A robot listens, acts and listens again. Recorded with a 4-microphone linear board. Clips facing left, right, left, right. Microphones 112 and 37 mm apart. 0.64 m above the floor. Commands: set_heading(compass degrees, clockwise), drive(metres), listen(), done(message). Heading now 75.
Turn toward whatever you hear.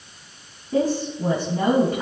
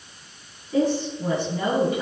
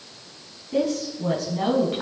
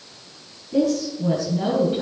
set_heading(25)
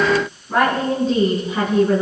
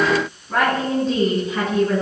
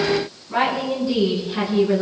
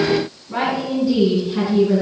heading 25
set_heading(15)
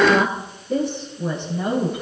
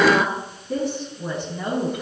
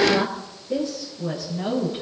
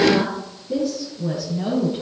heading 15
done("Found it: a woman speaking, straight ahead, over 4 m away.")